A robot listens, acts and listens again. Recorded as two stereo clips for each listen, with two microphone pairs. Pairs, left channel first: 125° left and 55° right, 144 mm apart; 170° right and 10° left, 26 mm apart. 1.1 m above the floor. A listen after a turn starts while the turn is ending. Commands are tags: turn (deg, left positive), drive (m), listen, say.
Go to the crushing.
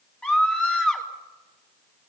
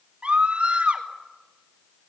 <listen/>
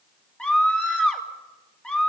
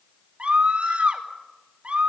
<listen/>
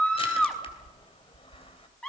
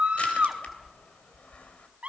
<turn deg="175"/>
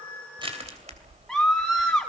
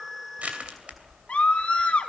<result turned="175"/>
<turn deg="-15"/>
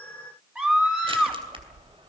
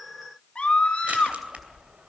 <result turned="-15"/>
<drive m="1.0"/>
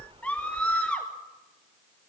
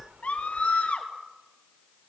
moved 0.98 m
<drive m="1.0"/>
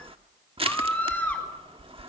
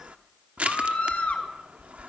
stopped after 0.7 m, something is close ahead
<say>I am next to the crushing.</say>